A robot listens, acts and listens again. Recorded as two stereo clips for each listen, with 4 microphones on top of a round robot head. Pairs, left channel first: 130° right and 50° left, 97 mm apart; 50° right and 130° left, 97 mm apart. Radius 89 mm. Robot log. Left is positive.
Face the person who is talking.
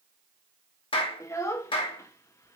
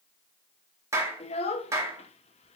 note: The child speaking: 70° right.
cmd yaw -70
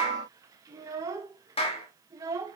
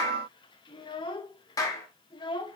note: The child speaking is now 10° right.
cmd yaw -10
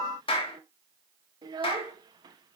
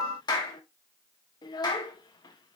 end: Found it: a child speaking, straight ahead.